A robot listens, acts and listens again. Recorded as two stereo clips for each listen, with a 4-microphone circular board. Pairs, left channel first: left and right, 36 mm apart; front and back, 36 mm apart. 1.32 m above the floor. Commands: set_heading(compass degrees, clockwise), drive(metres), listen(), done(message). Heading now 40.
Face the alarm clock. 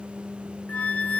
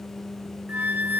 listen()
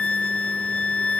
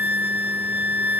listen()
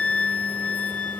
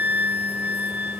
done("I can't make out an alarm clock, only a flute.")